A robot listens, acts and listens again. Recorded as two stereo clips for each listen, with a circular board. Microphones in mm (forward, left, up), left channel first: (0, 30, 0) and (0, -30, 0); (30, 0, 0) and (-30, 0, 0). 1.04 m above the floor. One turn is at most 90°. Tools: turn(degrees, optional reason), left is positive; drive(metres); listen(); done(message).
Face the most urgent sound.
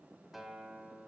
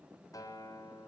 listen()
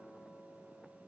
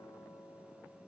listen()
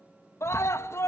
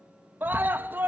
turn(degrees=90, reason="The scream: 125° left.")
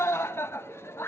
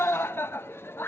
turn(degrees=45, reason="The scream is now 45° left.")
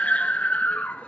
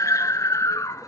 turn(degrees=20, reason="The scream is now 20° left.")
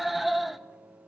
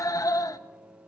done("Found it: a scream, straight ahead.")